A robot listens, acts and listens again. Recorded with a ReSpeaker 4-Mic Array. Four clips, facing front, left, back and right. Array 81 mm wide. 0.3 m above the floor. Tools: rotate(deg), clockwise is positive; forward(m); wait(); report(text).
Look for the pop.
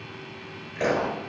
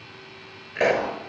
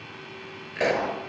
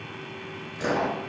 rotate(-110)
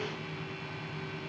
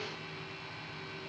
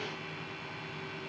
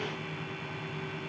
report("I heard a pop from this way, but can't make it out now.")